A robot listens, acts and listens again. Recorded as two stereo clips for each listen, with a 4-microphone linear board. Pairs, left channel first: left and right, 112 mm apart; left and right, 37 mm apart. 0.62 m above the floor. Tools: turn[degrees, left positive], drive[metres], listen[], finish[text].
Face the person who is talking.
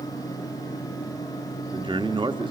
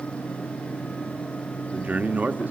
Thought: The man speaking: about 45° right or 135° right.
Action: turn[-45]
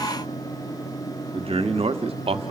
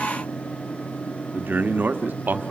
Thought: So it is at 75° right.
Action: turn[-75]
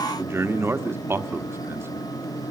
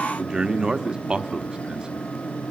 Thought: The man speaking is now 25° right.
Action: turn[-25]
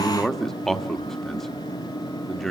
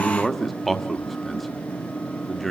Action: finish[Facing the man speaking, 1 to 2 m away.]